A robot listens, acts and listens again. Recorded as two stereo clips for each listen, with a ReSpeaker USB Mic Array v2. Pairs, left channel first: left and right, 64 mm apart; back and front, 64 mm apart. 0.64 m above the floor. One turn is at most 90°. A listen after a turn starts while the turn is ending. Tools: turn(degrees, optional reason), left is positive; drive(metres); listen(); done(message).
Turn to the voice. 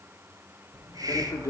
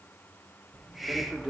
turn(degrees=90, reason="The man speaking: 100° left.")
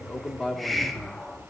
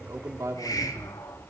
turn(degrees=10, reason="The man speaking is now 10° left.")
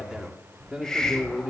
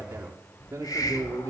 done("Found it: a man speaking, straight ahead, 1 to 2 m away.")